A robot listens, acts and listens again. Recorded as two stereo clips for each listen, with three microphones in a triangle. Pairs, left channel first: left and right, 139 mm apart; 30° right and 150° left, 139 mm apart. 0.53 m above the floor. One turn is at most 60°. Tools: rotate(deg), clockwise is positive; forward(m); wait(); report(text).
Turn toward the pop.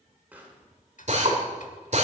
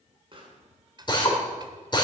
rotate(60)
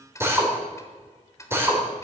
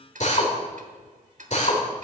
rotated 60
rotate(60)
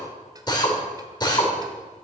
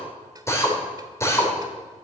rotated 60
rotate(50)
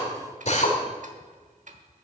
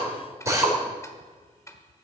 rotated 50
report("I heard a pop from this way, but can't make it out now.")